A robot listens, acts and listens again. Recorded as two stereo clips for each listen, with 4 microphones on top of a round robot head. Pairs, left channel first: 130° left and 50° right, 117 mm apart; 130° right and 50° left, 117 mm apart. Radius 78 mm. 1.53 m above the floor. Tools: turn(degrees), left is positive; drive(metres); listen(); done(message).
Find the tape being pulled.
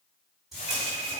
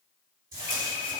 turn(degrees=40)
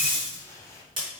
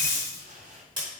done("Facing the tape being pulled.")